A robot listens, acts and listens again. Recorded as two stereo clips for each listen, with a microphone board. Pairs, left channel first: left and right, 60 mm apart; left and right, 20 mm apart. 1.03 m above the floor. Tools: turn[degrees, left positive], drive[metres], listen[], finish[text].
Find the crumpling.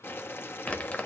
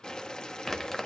Thought: The crumpling: about 25° left or 155° left.
Action: turn[25]
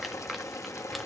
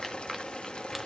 Action: finish[Found it: crumpling, straight ahead, 1 to 2 m away.]